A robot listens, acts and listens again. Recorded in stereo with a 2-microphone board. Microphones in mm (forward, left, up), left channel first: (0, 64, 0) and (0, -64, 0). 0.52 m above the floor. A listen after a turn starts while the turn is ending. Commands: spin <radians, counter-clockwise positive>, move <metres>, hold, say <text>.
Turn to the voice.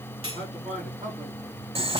spin -1.31
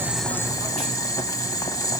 hold
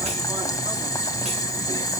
hold
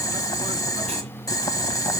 say I heard a man speaking, but can't make it out now. It was about straight ahead or 30° right.